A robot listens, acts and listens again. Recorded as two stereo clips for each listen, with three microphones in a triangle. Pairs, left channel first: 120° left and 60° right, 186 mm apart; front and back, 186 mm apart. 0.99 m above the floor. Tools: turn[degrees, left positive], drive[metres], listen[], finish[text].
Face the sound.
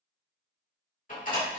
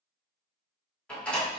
Thought: The door slam: 85° left.
Action: turn[85]
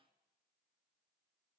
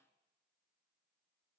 Action: finish[Facing where the door slam came from. I can't hear it now.]